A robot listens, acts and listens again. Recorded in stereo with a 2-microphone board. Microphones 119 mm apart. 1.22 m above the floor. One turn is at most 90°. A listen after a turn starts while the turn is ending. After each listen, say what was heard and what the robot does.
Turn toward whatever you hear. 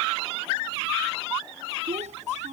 Turn 90° right.
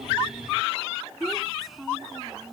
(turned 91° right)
Found it: a child speaking, straight ahead.